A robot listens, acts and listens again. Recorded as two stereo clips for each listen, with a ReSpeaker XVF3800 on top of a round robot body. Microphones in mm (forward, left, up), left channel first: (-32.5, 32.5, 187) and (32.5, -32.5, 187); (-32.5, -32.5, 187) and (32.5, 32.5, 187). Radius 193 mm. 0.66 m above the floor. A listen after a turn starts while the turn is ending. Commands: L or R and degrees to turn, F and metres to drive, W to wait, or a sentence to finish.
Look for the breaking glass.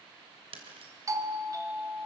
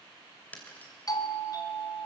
R60
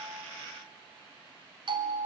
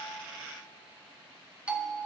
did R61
I heard breaking glass from this way, but can't make it out now.